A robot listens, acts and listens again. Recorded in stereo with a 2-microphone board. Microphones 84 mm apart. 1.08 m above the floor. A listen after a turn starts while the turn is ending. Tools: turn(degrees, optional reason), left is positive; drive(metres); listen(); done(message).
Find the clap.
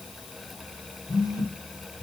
listen()
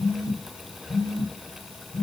listen()
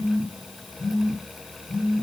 done("I can't make out a clap to turn to.")